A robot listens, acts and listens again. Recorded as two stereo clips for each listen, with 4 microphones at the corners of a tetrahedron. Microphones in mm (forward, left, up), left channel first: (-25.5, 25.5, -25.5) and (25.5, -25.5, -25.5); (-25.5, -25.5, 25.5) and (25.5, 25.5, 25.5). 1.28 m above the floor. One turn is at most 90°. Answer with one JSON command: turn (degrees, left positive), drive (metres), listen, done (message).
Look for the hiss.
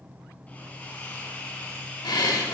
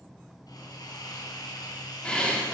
{"turn": -90}
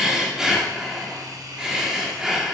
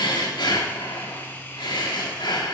{"turn": -70}
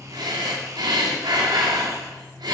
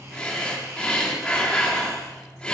{"listen": true}
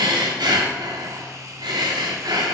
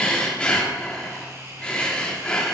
{"done": "Found it: a hiss, straight ahead."}